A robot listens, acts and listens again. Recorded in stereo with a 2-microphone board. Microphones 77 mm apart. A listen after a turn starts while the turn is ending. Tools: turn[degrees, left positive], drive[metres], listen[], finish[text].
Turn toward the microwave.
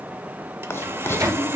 Thought: The microwave: about 40° right or 140° right.
Action: turn[-40]
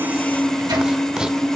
Thought: So it is at 90° right.
Action: turn[-90]
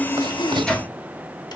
Thought: The microwave is now 10° left.
Action: turn[10]
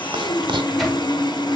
Action: listen[]
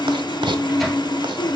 Action: finish[Facing the microwave, 1 to 2 m away.]